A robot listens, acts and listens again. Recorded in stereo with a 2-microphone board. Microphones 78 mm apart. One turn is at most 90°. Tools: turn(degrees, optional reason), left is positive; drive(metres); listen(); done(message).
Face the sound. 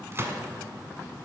turn(degrees=-35, reason="The gunshot: about 35° right or 145° right.")
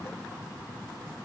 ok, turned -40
listen()
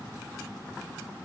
done("I heard a gunshot, but can't make it out now. It was about 5° left or 105° right.")